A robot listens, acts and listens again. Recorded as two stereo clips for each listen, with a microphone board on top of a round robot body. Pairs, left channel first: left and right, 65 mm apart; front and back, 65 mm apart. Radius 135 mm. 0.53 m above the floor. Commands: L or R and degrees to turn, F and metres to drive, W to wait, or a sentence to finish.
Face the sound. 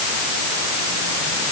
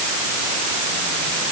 W
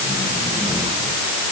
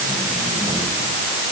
W
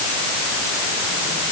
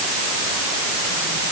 I can't make out anything.